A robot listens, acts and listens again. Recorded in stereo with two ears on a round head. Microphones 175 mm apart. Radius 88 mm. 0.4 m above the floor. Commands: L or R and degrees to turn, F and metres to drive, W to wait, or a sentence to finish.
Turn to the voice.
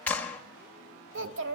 R65
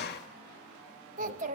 R40
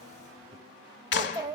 R15
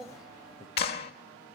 Found it: a child speaking, straight ahead, 1 to 2 m away.